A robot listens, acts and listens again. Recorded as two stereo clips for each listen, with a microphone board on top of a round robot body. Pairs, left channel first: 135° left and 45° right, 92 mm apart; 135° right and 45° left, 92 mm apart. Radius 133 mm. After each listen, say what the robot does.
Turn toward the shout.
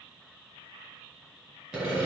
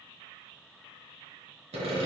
Keep listening.
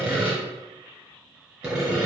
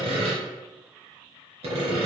Keep listening.
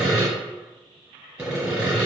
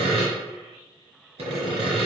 I can't make out a shout, only sawing.